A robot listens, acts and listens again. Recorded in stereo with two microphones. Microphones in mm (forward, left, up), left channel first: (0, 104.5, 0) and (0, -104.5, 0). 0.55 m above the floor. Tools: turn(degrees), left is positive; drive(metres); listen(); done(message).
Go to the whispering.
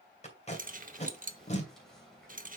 turn(degrees=30)
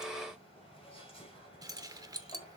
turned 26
turn(degrees=150)
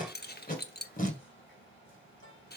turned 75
turn(degrees=75)
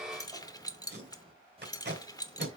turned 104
turn(degrees=-30)
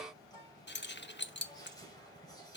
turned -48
turn(degrees=20)
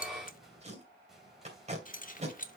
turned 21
drive(metres=1.0)
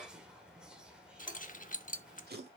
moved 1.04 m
drive(metres=1.0)
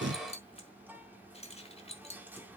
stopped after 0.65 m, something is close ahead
turn(degrees=-10)
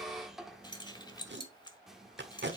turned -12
done("Arrived at the whispering, straight ahead.")